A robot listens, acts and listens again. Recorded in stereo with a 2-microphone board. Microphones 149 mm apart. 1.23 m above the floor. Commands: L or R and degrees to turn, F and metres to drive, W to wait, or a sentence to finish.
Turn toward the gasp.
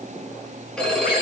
W
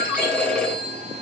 W
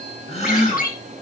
L40
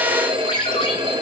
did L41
W
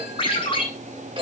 I heard a gasp, but can't make it out now. It was about straight ahead or 95° left.